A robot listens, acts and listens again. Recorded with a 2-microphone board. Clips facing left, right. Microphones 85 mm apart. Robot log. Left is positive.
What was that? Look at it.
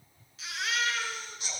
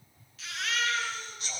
note: The baby crying: about 25° left or 155° left.
cmd yaw +25
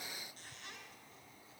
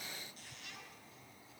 cmd idle
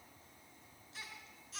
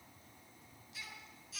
note: So it is at 130° left.
cmd yaw +130
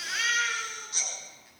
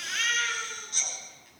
note: The baby crying is now 10° left.
cmd yaw +10
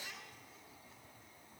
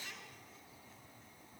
cmd idle
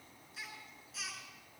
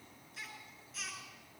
end: Found it: a baby crying, straight ahead, over 4 m away.